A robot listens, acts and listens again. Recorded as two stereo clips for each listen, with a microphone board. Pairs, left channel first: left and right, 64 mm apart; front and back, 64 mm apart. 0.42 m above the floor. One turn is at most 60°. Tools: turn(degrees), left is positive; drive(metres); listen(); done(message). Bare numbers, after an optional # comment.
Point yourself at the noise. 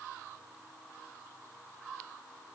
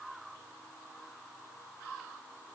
listen()
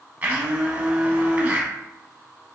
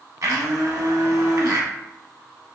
# The blender: 150° right.
turn(-60)
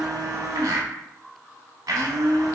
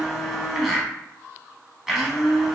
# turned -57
# The blender is now 95° right.
turn(-60)
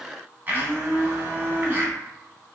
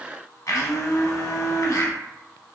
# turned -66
# The blender is now 30° right.
turn(-30)
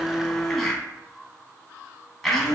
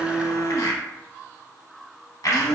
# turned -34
done("Found it: a blender, straight ahead, under 1 m away.")